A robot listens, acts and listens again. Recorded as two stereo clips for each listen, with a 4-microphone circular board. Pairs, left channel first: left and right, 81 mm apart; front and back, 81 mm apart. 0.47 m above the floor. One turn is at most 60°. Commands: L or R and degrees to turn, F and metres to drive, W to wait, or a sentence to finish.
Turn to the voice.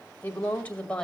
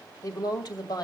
L15
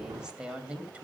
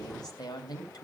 R20
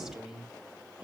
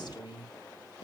R15
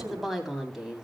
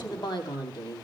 R10
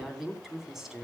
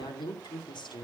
Facing the woman speaking, 2 to 4 m away.